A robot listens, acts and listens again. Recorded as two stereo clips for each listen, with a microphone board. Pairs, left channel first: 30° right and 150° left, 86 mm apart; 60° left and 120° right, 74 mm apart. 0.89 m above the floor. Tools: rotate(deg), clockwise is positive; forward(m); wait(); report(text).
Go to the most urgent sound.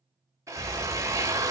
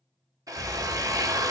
rotate(90)
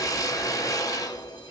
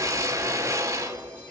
wait()
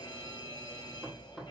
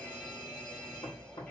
forward(1.0)
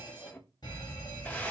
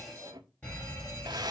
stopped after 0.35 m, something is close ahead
report("Something is in my way. I am facing the fire alarm but have not reached it.")